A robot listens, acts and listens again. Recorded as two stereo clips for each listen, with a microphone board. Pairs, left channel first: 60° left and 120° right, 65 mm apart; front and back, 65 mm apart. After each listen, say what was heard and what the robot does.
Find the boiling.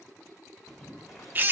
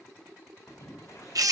The boiling: 30° right. Turn 30° right.
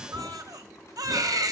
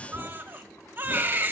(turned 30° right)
The boiling is now 20° left. Turn 20° left.
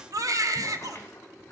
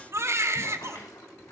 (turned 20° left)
Facing the boiling.